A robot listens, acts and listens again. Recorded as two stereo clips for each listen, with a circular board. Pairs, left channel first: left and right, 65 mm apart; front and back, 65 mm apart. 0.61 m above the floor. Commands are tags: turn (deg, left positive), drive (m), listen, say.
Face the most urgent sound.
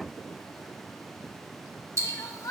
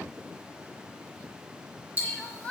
<turn deg="70"/>
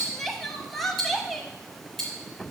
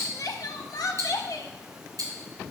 <say>Found it: crying, straight ahead, under 1 m away.</say>